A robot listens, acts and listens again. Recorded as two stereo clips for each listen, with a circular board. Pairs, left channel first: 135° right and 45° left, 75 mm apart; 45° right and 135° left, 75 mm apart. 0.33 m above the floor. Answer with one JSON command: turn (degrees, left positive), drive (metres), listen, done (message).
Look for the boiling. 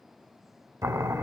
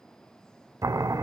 {"turn": 90}
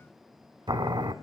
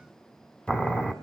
{"turn": 30}
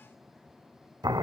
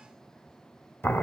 {"turn": 15}
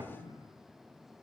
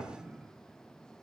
{"listen": true}
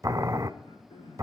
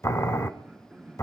{"done": "Found it: boiling, straight ahead."}